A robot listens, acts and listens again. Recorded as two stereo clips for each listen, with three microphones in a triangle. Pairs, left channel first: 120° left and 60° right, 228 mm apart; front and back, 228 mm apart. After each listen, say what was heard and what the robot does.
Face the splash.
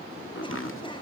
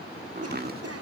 Keep listening.
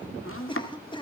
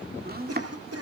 Keep listening.
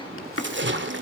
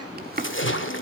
The splash: 25° right. Turn 25° right.
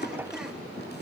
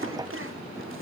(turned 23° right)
Facing where the splash came from. I can't hear it now.